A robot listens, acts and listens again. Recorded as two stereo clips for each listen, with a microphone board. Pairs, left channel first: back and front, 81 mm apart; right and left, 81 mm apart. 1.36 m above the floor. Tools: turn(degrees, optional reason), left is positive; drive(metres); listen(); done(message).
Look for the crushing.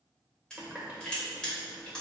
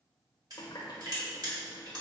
turn(degrees=100, reason="The crushing: 100° left.")
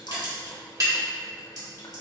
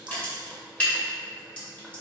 turn(degrees=-20, reason="The crushing is now 20° right.")
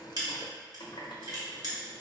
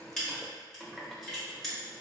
turn(degrees=-10, reason="The crushing is now 10° right.")
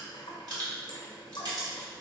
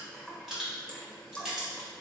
done("Found it: crushing, straight ahead, 1 to 2 m away.")